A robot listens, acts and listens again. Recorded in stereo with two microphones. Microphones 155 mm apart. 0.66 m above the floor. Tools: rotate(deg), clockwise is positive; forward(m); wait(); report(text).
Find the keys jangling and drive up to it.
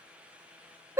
wait()
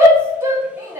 wait()
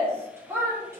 report("I can't make out keys jangling to turn to.")